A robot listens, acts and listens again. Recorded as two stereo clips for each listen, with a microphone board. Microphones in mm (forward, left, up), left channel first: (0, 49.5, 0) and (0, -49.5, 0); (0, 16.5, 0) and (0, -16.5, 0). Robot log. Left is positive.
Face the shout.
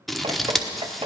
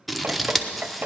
cmd idle
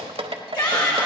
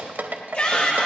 note: The shout: about 50° left or 130° left.
cmd yaw +50
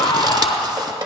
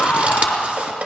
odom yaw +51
note: So it is at 80° left.
cmd yaw +80
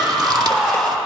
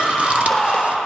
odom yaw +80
end: Found it: a shout, straight ahead, over 4 m away.